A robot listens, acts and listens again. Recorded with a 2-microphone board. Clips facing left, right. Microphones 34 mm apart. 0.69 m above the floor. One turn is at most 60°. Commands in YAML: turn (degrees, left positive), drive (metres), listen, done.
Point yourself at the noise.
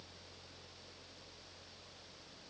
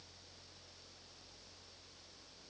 listen: true
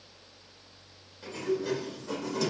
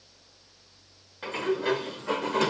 turn: -55
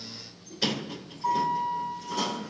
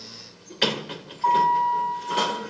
turn: -60
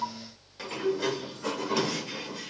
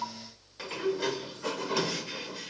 done: "Facing the sliding door, 2 to 4 m away."